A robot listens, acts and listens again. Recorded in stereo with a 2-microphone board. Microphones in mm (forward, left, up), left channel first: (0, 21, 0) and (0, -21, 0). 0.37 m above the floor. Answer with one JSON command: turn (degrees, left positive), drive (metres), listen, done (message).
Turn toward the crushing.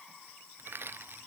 {"turn": -55}
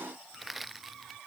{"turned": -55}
{"done": "Found it: crushing, straight ahead."}